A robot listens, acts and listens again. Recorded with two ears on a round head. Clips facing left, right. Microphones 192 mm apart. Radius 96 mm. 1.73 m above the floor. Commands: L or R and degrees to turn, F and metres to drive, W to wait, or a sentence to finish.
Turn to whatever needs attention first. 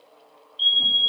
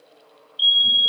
R30
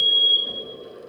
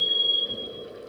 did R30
L15
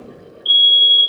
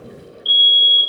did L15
Found it: a fire alarm, straight ahead.